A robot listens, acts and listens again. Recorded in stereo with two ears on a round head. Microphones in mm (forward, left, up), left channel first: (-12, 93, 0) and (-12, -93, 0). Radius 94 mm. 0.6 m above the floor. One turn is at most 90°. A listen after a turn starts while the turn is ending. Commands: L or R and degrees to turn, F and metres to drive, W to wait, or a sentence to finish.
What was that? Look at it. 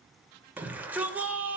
R30
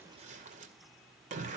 R90
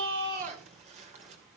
R35
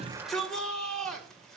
Facing the shout, 2 to 4 m away.